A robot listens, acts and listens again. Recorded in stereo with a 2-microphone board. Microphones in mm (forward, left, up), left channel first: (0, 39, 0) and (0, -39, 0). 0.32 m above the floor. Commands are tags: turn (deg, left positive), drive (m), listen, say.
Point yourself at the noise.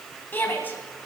<turn deg="25"/>
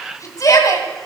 <turn deg="130"/>
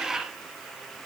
<listen/>
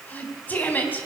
<turn deg="25"/>
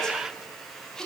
<turn deg="10"/>
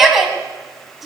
<say>Found it: a shout, straight ahead, 2 to 4 m away.</say>